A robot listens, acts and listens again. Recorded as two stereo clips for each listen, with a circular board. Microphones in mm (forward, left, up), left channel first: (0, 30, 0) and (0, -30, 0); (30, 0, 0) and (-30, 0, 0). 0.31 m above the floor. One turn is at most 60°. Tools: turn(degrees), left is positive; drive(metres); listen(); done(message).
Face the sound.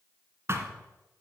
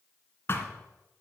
turn(degrees=-45)
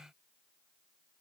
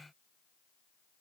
done("I heard a thud from this way, but can't make it out now.")